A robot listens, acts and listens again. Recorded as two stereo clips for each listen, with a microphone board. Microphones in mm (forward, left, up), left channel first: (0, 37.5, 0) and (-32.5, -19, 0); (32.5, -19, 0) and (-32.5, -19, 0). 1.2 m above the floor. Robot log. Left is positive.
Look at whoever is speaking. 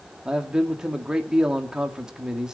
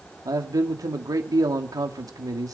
note: The man speaking: 160° left.
cmd yaw +160
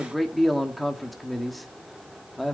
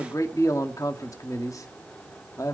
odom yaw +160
note: The man speaking is now 30° right.
cmd yaw -30
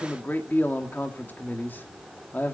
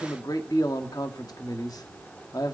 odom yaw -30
end: Found it: a man speaking, straight ahead, 2 to 4 m away.